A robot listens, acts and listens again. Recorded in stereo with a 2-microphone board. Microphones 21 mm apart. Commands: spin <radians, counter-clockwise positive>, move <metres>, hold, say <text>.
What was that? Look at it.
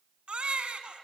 spin -1.05
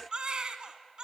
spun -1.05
spin -0.87
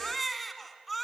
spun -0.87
say Facing the baby crying, 1 to 2 m away.